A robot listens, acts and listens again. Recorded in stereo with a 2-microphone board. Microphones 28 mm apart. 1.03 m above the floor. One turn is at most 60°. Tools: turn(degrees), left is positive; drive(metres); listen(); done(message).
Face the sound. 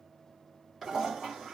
turn(degrees=-30)
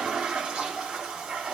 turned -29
turn(degrees=-60)
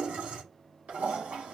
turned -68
turn(degrees=-60)
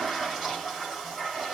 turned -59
turn(degrees=-20)
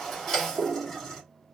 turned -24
done("Found it: a toilet flushing, straight ahead, 2 to 4 m away.")